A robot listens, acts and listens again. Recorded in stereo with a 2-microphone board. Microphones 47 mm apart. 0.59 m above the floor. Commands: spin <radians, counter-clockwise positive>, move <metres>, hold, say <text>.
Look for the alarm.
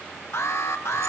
spin 1.22
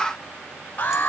spin 0.70
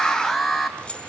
say Facing the alarm, 2 to 4 m away.